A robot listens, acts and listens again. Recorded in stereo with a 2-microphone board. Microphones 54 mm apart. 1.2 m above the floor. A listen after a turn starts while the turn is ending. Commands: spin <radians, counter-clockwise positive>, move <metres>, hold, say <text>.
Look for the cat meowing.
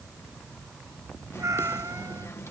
spin -1.57
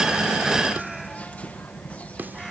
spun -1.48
hold
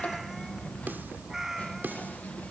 say Found it: a cat meowing, straight ahead.